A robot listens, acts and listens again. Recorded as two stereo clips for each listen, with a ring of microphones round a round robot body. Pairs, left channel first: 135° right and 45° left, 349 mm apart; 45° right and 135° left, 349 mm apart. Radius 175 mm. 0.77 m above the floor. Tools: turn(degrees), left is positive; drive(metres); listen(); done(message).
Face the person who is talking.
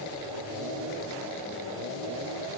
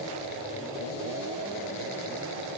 listen()
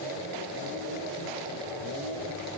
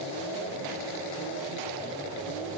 listen()
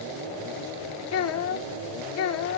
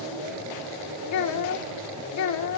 turn(degrees=-90)
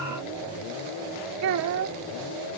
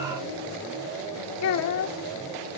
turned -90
done("Found it: a child speaking, straight ahead.")